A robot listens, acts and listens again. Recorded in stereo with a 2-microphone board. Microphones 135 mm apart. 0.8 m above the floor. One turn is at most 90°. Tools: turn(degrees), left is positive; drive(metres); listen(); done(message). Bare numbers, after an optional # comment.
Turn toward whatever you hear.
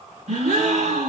# The gasp: about 65° right or 115° right.
turn(-65)
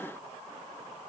listen()
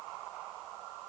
done("I heard a gasp, but can't make it out now. It was about straight ahead or 50° right.")